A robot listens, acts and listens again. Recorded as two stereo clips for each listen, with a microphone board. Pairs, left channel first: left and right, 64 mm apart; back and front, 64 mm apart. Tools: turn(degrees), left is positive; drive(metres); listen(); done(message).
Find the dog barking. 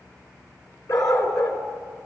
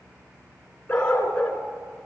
turn(degrees=110)
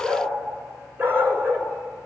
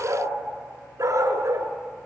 turn(degrees=-40)
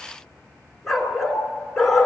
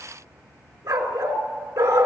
done("Found it: a dog barking, straight ahead.")